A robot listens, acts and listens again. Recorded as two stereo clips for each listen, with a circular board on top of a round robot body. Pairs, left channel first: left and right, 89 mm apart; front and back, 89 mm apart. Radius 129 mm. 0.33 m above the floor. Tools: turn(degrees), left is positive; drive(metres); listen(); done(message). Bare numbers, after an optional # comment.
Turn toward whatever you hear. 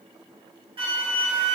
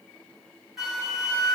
# The flute: 95° right.
turn(-95)
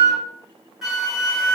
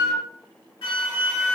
done("Found it: a flute, straight ahead, 1 to 2 m away.")